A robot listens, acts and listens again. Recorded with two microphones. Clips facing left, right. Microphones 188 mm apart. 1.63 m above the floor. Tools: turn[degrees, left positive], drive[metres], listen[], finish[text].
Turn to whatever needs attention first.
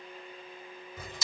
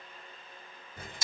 Action: listen[]
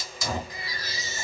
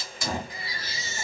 Thought: The baby crying: about 25° right or 155° right.
Action: turn[-25]
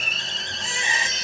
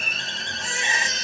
Thought: So it is at 120° right.
Action: turn[-120]
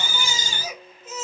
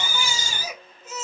Thought: The baby crying is now 10° right.
Action: turn[-10]
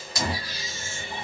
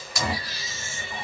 Action: finish[Found it: a baby crying, straight ahead.]